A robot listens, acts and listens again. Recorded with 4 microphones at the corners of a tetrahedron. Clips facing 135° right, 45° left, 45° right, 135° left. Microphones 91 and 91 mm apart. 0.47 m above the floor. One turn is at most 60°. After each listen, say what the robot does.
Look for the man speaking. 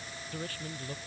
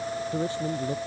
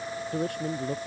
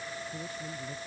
Turn 25° right.
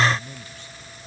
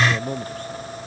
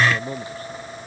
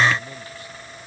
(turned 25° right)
Facing the man speaking.